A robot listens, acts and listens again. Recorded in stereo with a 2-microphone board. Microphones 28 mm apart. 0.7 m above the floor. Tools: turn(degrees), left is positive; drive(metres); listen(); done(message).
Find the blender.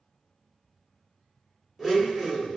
turn(degrees=30)
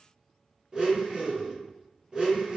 turn(degrees=-30)
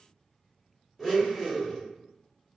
done("Facing the blender, under 1 m away.")